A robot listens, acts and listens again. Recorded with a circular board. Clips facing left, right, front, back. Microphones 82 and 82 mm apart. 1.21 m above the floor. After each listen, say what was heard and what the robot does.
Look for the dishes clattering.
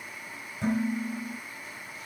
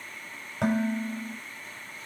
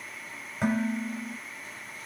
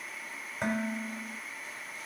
The dishes clattering: 90° right. Turn 90° right.
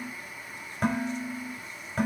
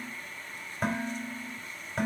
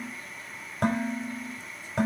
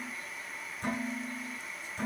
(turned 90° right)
Facing the dishes clattering.